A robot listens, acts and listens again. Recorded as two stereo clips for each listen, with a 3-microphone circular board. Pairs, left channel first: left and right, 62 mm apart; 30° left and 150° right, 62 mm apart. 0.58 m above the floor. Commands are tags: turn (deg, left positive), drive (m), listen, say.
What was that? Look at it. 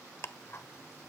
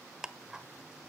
<turn deg="130"/>
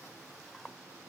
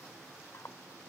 <say>Facing the ticking.</say>